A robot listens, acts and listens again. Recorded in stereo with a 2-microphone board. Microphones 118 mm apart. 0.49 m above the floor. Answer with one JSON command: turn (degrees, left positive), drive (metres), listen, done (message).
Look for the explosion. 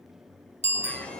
{"turn": 90}
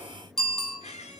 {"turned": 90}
{"done": "Facing where the explosion came from. I can't hear it now."}